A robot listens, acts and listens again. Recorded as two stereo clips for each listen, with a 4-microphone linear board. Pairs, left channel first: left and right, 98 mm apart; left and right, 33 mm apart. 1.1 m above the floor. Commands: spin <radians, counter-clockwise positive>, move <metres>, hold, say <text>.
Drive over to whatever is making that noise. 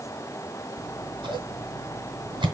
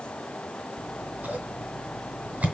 spin -1.05
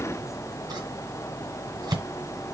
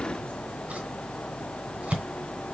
spin -0.87
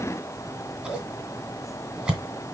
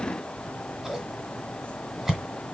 move 1.0
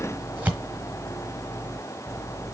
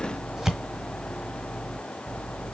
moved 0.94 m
spin -0.26
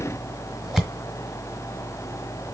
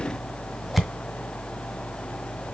move 1.0
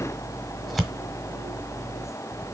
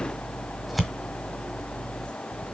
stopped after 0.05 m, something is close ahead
say I am next to the scissors.